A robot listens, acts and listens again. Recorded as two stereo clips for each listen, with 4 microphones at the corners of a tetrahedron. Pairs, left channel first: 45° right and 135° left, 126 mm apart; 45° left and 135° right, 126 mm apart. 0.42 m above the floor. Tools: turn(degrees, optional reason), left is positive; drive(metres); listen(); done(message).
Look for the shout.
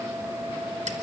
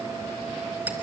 listen()
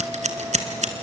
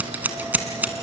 listen()
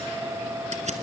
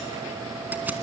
done("I can't make out a shout to turn to.")